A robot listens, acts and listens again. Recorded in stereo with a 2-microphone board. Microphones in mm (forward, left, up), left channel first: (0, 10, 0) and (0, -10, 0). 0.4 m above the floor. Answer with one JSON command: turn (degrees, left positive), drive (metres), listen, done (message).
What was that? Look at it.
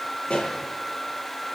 {"turn": 65}
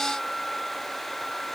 {"listen": true}
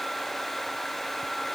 {"done": "I heard a pop, but can't make it out now. It was about straight ahead or 50° left."}